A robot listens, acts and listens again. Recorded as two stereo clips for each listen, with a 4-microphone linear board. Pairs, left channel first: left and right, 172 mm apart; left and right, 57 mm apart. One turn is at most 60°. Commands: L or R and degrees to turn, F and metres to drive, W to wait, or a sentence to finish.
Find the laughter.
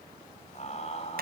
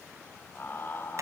L40
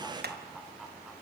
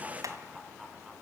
Facing the laughter, 2 to 4 m away.